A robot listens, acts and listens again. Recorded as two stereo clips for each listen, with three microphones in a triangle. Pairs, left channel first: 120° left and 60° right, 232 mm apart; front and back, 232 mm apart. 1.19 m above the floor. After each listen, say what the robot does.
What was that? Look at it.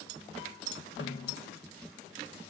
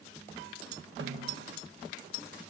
Turn 145° left.
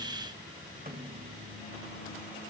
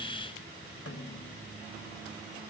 Turn 10° right.
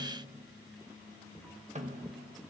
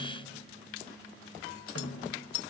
Found it: a snare drum, straight ahead.